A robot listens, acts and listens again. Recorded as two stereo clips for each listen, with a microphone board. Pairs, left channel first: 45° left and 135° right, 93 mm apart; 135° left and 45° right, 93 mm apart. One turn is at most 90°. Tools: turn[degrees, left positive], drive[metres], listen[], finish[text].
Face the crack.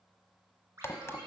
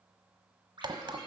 Thought: The crack: 15° right.
Action: turn[-15]
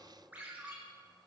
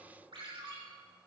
Action: finish[Facing where the crack came from. I can't hear it now.]